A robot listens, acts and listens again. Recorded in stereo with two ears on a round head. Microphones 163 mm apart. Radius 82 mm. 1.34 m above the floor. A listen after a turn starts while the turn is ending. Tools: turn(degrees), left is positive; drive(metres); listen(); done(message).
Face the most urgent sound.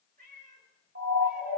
turn(degrees=-60)
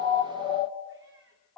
done("Facing the siren.")